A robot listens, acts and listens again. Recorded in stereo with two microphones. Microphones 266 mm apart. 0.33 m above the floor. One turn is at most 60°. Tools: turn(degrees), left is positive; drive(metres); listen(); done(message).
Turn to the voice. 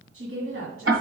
turn(degrees=-55)
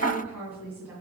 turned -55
done("Found it: a woman speaking, straight ahead, 2 to 4 m away.")